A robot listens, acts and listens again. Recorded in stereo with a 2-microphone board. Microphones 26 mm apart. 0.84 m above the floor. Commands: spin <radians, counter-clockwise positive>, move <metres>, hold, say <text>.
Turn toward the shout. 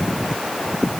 hold
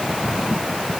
hold
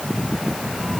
say I can't make out a shout.